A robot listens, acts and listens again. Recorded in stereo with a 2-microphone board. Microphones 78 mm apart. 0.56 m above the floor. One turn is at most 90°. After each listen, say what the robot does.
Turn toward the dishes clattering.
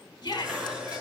Turn 30° right.
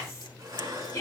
Turn 90° right.
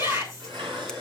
Turn 75° right.
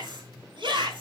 Keep listening.
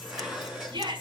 Found it: dishes clattering, straight ahead, over 4 m away.